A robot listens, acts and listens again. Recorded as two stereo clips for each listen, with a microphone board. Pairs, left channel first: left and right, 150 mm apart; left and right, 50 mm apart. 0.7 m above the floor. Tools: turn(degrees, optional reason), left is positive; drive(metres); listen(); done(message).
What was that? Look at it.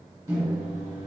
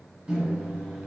turn(degrees=-25, reason="The microwave: about 25° right or 155° right.")
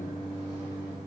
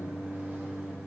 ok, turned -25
turn(degrees=-130, reason="So it is at 130° right.")
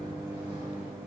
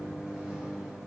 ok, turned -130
turn(degrees=-10, reason="The microwave is now 10° right.")
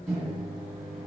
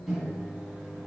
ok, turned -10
done("Facing the microwave, 1 to 2 m away.")